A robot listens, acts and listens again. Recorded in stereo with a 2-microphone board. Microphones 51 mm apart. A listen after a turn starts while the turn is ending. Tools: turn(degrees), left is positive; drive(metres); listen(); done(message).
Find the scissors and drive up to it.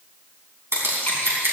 turn(degrees=-60)
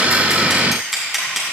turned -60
drive(metres=1.0)
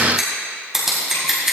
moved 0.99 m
turn(degrees=-10)
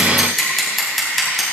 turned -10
drive(metres=1.0)
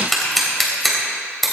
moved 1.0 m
drive(metres=1.0)
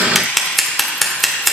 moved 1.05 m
drive(metres=1.0)
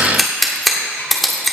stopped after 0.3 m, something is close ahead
done("Arrived at the scissors, straight ahead.")